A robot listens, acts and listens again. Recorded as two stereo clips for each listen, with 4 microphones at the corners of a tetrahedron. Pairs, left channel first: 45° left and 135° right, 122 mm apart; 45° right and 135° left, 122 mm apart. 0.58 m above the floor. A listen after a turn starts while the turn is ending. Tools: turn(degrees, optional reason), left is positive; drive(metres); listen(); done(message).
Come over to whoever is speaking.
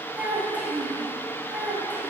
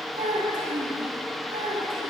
turn(degrees=150, reason="The child speaking: 150° left.")
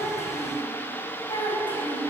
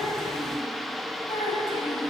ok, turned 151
drive(metres=1.0)
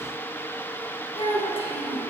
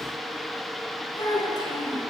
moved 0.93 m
drive(metres=1.0)
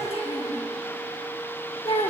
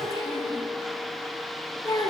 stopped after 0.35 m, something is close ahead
turn(degrees=10, reason="The child speaking is now 10° left.")
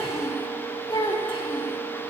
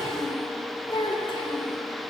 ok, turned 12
done("Arrived at the child speaking, straight ahead.")